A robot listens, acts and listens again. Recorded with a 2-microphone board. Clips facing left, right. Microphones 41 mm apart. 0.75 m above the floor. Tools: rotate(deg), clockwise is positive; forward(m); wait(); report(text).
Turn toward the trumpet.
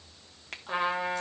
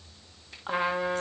rotate(-30)
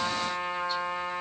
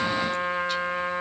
rotate(30)
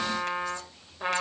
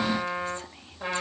rotate(-15)
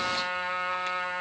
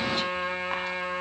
report("Found it: a trumpet, straight ahead.")